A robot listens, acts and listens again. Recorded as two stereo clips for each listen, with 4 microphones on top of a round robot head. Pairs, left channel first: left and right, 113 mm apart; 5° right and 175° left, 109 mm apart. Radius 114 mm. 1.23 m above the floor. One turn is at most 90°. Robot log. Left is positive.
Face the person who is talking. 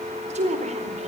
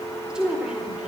note: The woman speaking: 100° right.
cmd yaw -90
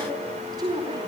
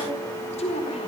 note: The woman speaking is now 30° right.
cmd yaw -30
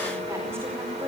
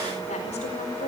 cmd idle
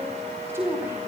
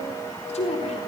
note: The woman speaking is now 20° right.
cmd yaw -20
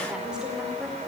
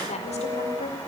end: Found it: a woman speaking, straight ahead.